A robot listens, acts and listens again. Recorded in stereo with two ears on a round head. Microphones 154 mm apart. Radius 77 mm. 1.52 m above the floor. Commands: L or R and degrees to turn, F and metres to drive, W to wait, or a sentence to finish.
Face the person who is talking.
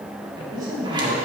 R25
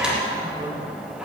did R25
W
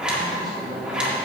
W
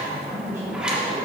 R15
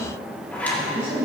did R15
R15
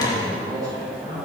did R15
R30
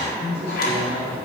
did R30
R115
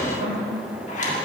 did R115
R45
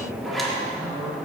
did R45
Facing the man speaking.